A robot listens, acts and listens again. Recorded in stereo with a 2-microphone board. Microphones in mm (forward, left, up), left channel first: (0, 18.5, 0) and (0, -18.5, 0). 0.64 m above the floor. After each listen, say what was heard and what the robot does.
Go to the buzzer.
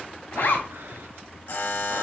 The buzzer: about 70° left or 110° left. Turn 70° left.
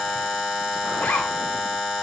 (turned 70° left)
Drive 1.0 m forward.
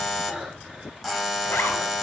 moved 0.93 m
Drive 1.0 m forward.
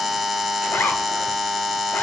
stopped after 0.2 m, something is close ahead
Arrived at the buzzer, straight ahead.